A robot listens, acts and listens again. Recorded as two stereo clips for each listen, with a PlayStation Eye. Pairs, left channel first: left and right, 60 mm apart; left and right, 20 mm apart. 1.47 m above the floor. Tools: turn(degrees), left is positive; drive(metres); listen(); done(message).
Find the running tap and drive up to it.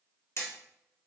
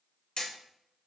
listen()
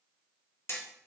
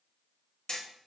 listen()
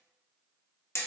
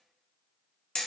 done("I can't make out a running tap, only hammering.")